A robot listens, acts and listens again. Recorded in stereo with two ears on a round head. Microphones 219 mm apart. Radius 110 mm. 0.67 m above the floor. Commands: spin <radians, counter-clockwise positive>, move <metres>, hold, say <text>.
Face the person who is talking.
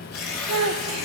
spin -1.22
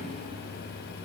hold
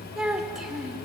say Found it: a child speaking, straight ahead, under 1 m away.